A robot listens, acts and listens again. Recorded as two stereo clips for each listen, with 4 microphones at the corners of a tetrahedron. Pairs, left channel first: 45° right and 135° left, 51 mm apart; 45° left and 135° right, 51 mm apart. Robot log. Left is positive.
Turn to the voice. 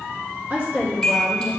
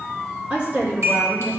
note: The woman speaking: straight behind.
cmd yaw +180
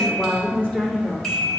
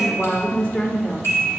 note: The woman speaking is now 15° left.
cmd yaw +15
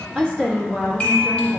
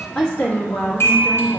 note: The woman speaking is now 45° left.
cmd yaw +45
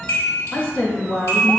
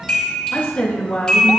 note: The woman speaking is now 15° left.
cmd yaw +15
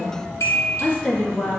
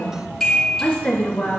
end: Found it: a woman speaking, straight ahead, 1 to 2 m away.